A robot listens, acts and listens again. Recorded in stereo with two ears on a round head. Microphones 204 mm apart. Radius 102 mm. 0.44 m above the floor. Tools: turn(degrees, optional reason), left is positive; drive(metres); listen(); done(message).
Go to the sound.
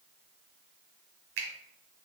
turn(degrees=-65, reason="The finger snap: about 65° right or 115° right.")
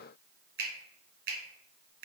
turn(degrees=-45, reason="So it is at 45° right.")
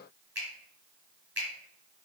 drive(metres=1.0)
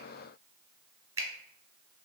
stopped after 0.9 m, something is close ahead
turn(degrees=-15, reason="The finger snap is now 15° right.")
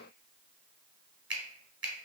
done("Arrived at the finger snap, straight ahead.")